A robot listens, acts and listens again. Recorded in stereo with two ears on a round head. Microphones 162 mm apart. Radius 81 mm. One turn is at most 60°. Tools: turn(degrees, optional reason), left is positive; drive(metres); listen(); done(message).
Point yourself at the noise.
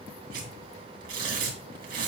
turn(degrees=-55, reason="The tearing paper: about 55° right or 125° right.")
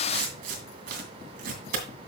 turn(degrees=-60, reason="So it is at 65° right.")
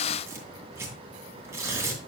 turn(degrees=-15, reason="The tearing paper is now 15° right.")
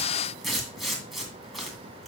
done("Facing the tearing paper.")